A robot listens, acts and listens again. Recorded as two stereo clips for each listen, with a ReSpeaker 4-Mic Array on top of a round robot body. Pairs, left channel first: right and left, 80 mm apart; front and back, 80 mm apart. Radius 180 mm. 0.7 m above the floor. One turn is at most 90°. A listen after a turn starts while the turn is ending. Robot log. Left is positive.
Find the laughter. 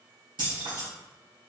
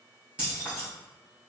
cmd idle
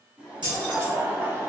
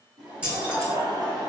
note: The laughter: 145° left.
cmd yaw +90
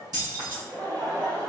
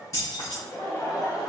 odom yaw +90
note: The laughter is now 45° left.
cmd yaw +45
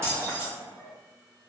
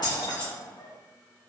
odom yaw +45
note: The laughter is now 20° left.
cmd yaw +20
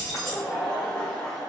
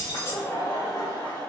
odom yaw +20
note: The laughter is now 15° right.
cmd yaw -15
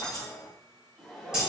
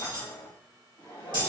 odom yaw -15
end: Facing the laughter, 2 to 4 m away.